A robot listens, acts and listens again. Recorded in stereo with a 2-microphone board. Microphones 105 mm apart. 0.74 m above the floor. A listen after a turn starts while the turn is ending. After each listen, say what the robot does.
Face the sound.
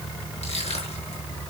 Turn 90° left.
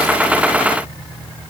Keep listening.
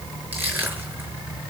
Turn 15° right.
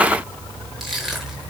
Facing the crushing, over 4 m away.